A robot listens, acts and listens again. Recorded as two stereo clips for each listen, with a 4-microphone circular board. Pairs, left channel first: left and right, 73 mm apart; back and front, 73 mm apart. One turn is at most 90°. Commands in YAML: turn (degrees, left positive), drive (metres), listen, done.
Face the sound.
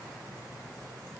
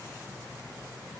listen: true
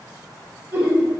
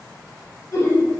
turn: -90
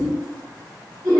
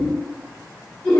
turn: -90
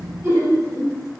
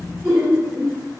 turn: -45
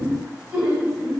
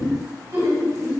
turn: -15
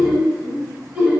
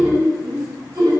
done: "Found it: laughter, straight ahead, 1 to 2 m away."